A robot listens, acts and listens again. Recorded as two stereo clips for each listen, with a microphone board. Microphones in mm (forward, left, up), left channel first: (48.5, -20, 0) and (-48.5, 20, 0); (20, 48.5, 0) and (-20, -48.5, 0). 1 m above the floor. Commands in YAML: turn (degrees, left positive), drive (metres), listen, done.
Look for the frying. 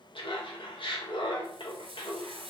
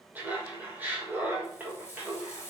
turn: 130
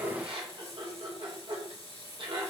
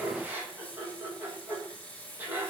turn: -10
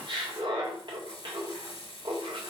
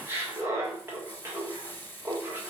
done: "Facing the frying, 2 to 4 m away."